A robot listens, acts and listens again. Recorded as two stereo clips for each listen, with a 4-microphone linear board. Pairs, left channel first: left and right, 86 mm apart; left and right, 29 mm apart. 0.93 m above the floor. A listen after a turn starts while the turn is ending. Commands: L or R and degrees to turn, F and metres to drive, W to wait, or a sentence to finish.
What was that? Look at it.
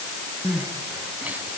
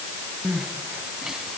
R20
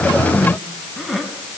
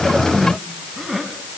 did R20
Facing the crying, 2 to 4 m away.